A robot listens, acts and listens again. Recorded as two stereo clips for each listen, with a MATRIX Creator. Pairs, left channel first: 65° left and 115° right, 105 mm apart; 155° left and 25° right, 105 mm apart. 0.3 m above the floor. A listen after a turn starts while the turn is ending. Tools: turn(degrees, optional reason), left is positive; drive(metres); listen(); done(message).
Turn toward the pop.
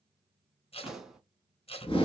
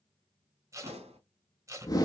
turn(degrees=-25, reason="The pop: 25° right.")
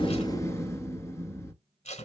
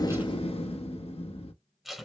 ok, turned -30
done("Facing where the pop came from. I can't hear it now.")